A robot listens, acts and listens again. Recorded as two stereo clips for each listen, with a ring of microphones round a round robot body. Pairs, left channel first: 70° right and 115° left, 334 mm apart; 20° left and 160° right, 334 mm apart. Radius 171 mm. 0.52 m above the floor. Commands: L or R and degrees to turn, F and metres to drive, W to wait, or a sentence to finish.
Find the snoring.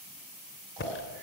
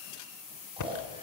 L125
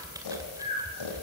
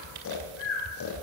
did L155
R30
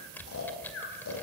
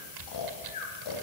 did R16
R15
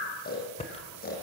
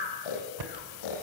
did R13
Facing the snoring, over 4 m away.